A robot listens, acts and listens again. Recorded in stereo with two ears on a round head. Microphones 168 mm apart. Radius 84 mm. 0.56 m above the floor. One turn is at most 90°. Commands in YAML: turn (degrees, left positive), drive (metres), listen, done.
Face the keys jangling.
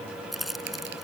turn: 30
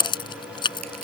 turn: 90
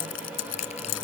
turn: 75
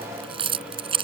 turn: -30
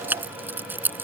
turn: -10
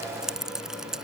done: "Found it: keys jangling, straight ahead."